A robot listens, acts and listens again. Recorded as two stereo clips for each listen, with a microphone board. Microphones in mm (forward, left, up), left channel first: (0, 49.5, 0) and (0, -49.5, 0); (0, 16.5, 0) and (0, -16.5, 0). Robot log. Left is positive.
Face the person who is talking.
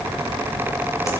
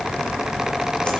cmd idle
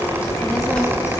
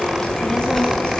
cmd yaw +30
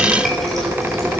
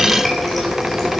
cmd idle
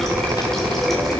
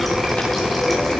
note: So it is at 140° left.
cmd yaw +140
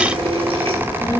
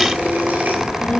note: The child speaking is now 30° left.
cmd yaw +30
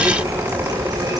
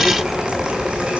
end: Found it: a child speaking, straight ahead, 1 to 2 m away.